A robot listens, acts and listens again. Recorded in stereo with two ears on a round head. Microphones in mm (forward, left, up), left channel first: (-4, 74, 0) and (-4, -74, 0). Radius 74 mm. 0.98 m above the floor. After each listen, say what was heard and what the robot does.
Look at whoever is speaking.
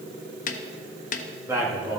Turn 30° right.
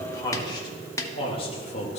So it is at 40° left. Turn 40° left.
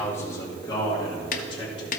The man speaking is now 35° left. Turn 35° left.
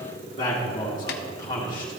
The man speaking is now 25° left. Turn 25° left.
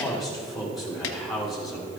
Found it: a man speaking, straight ahead.